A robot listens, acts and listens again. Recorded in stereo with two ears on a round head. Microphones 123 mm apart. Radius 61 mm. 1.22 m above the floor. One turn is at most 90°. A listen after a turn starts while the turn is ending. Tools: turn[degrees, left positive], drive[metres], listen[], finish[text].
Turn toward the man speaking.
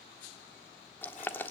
Action: listen[]
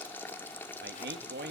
Action: turn[-90]
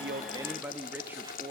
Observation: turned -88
Thought: So it is at 20° right.
Action: turn[-20]
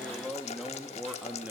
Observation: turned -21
Thought: The man speaking is now 10° right.
Action: turn[-10]
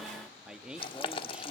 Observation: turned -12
Action: finish[Facing the man speaking.]